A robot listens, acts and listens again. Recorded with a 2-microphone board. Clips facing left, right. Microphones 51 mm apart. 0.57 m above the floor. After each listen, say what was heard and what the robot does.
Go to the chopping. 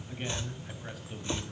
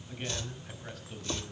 The chopping: about 25° left or 155° left. Turn 25° left.
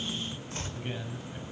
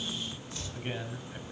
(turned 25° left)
So it is at 125° left. Turn 125° left.
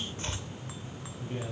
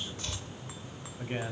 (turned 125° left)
The chopping is now 40° left. Turn 40° left.
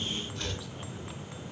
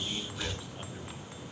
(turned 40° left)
The chopping is now 10° right. Turn 10° right.
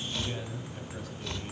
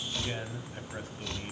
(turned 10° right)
Drive 1.0 m forward.
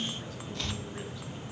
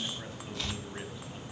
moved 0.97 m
Drive 1.0 m forward.
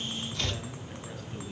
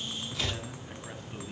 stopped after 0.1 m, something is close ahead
The chopping is now 10° right. Turn 10° right.
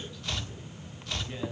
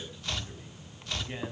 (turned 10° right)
Arrived at the chopping, straight ahead.